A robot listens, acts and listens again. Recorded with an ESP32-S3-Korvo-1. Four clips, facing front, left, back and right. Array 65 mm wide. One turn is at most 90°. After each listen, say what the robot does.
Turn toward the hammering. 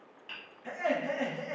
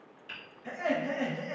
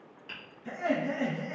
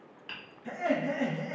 Turn 85° right.
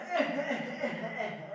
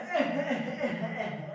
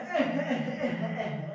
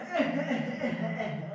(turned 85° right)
Keep listening.
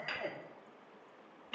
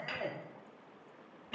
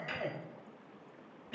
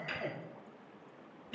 Turn 25° left.
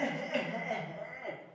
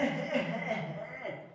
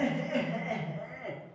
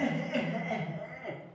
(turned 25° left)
Keep listening.
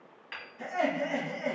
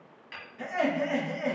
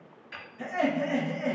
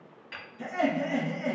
Facing the hammering.